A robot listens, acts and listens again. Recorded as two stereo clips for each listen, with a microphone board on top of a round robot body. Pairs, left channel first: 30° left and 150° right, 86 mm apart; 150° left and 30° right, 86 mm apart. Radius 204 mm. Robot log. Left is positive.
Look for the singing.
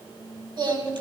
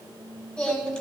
note: The singing: 130° right.
cmd yaw -130
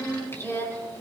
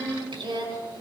note: The singing is now 25° right.
cmd yaw -25
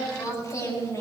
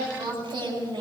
note: The singing is now 15° right.
cmd yaw -15
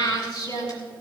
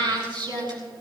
end: Found it: singing, straight ahead, over 4 m away.